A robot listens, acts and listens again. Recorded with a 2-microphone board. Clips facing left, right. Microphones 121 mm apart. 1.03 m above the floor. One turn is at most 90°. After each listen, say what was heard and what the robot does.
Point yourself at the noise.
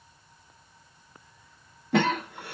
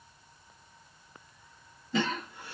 The cough: about 60° left or 120° left. Turn 60° left.
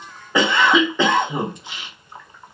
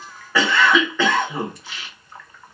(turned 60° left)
So it is at 20° left. Turn 20° left.
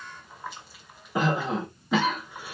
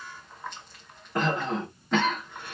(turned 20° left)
Facing the cough, 1 to 2 m away.